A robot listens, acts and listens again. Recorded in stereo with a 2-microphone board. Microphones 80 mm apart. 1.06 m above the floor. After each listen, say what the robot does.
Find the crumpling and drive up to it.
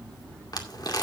Turn 55° left.
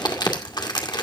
Turn 70° left.
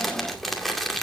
Drive 1.0 m forward.
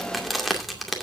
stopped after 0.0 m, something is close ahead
Blocked. The crumpling is further on, straight ahead.